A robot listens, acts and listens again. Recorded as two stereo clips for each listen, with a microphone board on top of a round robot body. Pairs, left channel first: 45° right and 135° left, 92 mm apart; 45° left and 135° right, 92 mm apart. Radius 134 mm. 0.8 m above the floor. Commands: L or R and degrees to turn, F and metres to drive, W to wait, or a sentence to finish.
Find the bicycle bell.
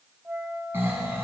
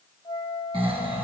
W
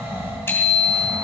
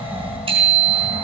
R115
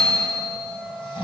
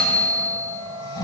L35
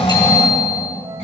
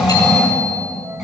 W
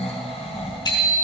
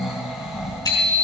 Found it: a bicycle bell, straight ahead.